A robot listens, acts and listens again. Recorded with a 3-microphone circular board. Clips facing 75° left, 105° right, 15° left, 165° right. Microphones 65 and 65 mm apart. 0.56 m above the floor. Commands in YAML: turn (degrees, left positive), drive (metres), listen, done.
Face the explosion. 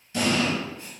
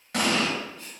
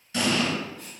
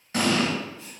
turn: -120
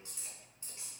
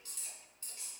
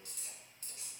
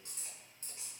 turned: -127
done: "Facing where the explosion came from. I can't hear it now."